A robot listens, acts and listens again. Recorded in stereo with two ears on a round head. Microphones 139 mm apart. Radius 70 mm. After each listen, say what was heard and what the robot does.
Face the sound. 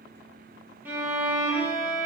Turn 30° right.
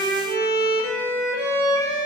So it is at 20° left. Turn 20° left.
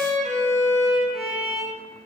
Found it: a violin, straight ahead, under 1 m away.